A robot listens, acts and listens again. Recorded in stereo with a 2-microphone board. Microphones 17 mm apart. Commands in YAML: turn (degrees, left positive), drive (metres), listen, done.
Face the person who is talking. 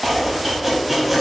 listen: true
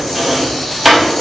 listen: true
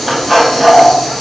done: "I can't make out anyone speaking, only a hiss and chopping."